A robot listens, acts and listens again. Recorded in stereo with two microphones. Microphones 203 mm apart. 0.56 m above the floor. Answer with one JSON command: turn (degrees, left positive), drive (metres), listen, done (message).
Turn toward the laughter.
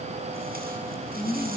{"turn": 25}
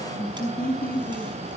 {"turn": 135}
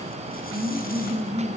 {"turn": -10}
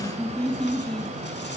{"done": "Found it: laughter, straight ahead, over 4 m away."}